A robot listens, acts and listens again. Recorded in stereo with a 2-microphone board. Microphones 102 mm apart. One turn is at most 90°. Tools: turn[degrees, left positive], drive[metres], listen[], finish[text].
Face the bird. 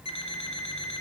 Action: listen[]
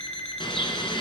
Thought: The bird: about 55° left or 125° left.
Action: turn[55]
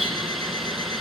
Action: finish[Found it: a bird, straight ahead, 1 to 2 m away.]